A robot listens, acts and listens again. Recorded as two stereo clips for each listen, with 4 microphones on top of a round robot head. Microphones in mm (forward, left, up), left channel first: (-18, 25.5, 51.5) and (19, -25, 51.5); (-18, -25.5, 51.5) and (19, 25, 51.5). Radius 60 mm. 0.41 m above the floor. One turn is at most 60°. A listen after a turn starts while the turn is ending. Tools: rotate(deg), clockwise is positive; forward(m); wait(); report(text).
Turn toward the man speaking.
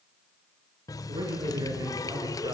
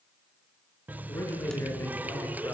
rotate(60)
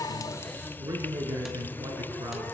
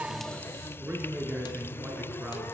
rotate(10)
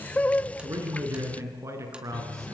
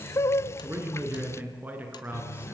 rotate(10)
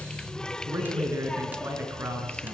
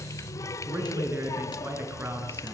report("Found it: a man speaking, straight ahead, over 4 m away.")